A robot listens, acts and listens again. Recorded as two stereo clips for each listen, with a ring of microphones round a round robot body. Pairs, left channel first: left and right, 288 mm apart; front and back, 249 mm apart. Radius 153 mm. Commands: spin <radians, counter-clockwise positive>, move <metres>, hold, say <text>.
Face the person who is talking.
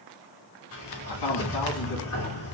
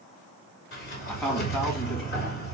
spin 1.57
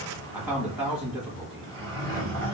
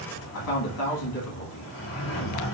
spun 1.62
say Facing the man speaking.